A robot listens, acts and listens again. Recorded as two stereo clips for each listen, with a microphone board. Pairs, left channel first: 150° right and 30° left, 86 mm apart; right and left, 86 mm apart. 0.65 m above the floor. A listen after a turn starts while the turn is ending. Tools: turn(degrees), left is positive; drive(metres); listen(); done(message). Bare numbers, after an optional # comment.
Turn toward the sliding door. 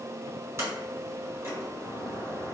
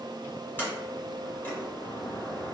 listen()
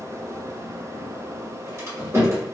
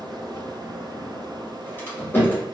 # The sliding door: 25° right.
turn(-25)
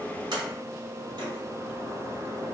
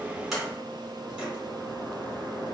listen()
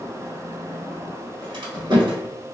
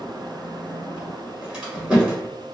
# The sliding door is now 15° left.
turn(15)
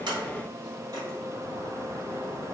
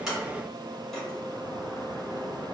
listen()
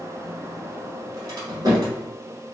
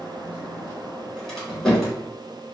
done("Facing the sliding door.")